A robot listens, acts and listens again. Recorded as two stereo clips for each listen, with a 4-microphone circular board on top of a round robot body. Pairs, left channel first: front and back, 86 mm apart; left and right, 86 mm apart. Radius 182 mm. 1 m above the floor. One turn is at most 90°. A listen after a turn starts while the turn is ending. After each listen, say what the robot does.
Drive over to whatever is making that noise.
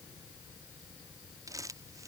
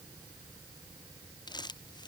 Turn 90° left.
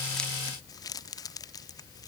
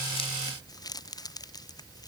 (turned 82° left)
Turn 45° left.
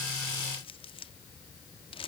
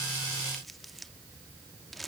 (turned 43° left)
Drive 1.0 m forward.
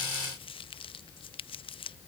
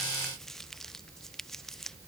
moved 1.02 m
Drive 1.0 m forward.
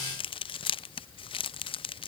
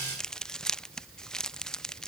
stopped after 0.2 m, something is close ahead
I am next to the crumpling.